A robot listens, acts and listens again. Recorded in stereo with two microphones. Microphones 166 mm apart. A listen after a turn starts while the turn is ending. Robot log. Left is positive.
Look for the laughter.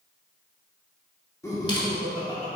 note: The laughter: about 35° left or 145° left.
cmd yaw +35
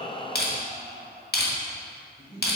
note: The laughter: about 30° left or 150° left.
cmd yaw +30
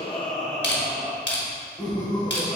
note: So it is at 15° left.
cmd yaw +15
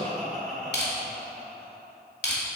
end: Found it: laughter, straight ahead.